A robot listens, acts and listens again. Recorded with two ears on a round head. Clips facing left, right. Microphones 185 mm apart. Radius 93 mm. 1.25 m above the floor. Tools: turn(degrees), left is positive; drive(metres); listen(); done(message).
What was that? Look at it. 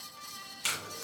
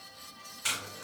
turn(degrees=40)
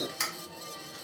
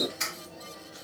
turn(degrees=100)
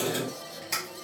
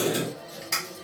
done("Found it: tape being pulled, straight ahead.")